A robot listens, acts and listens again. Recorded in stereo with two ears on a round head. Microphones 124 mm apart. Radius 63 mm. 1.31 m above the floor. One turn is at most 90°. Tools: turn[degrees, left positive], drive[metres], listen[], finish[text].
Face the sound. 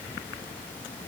Action: listen[]
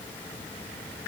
Action: listen[]
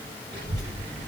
Action: turn[-90]
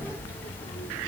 Thought: So it is at 30° left.
Action: turn[30]
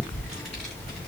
Thought: The child speaking is now 15° left.
Action: turn[15]
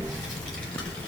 Thought: The child speaking is now 15° left.
Action: turn[15]
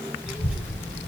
Action: finish[Found it: a child speaking, straight ahead.]